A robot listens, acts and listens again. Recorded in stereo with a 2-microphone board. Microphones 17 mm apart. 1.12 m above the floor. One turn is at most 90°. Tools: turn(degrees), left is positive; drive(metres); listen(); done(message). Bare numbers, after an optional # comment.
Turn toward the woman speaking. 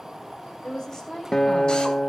# The woman speaking: about 40° left or 140° left.
turn(40)
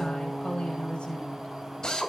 # So it is at 90° left.
turn(90)
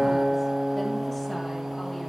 listen()
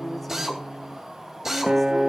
listen()
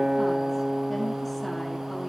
done("I heard a woman speaking from this way, but can't make it out now.")